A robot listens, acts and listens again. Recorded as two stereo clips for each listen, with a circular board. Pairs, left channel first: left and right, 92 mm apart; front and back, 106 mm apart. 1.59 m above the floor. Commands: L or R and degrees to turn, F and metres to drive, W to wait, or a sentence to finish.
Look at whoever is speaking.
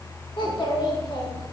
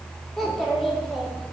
L90
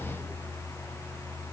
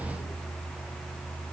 W
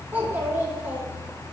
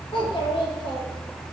R20
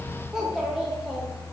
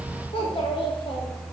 Facing the child speaking, 1 to 2 m away.